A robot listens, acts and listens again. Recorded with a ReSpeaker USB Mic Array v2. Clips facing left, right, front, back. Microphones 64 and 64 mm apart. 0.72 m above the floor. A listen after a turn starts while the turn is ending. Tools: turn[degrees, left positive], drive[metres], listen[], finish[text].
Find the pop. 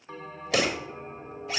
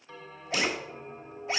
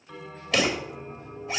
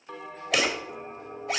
Thought: The pop: 100° left.
Action: turn[100]
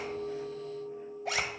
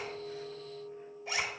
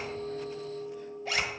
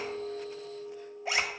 Action: finish[Facing where the pop came from. I can't hear it now.]